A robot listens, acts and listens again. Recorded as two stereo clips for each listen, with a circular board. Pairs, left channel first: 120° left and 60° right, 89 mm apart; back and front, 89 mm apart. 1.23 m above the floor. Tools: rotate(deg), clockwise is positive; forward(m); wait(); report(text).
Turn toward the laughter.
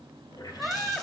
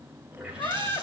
rotate(150)
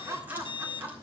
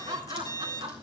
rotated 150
report("Facing the laughter, 2 to 4 m away.")